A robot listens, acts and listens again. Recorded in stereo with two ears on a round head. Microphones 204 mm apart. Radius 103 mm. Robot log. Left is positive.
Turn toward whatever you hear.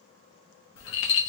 note: The rattle: about 60° left or 120° left.
cmd yaw +60
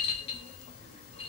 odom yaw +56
note: So it is at 30° left.
cmd yaw +30
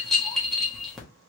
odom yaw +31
end: Found it: a rattle, straight ahead, 1 to 2 m away.